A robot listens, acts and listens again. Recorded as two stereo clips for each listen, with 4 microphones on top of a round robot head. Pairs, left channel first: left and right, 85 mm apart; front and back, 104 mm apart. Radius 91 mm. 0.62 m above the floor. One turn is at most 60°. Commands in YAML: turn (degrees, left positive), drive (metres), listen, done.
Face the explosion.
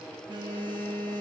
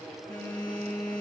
listen: true
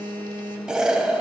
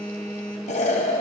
turn: -10
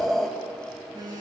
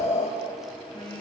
done: "Facing the explosion."